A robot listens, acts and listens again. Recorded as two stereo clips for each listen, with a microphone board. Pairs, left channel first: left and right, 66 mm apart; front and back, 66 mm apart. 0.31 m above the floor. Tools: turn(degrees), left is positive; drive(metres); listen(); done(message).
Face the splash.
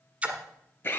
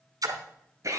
turn(degrees=-160)
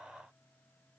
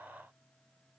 done("I heard a splash from this way, but can't make it out now.")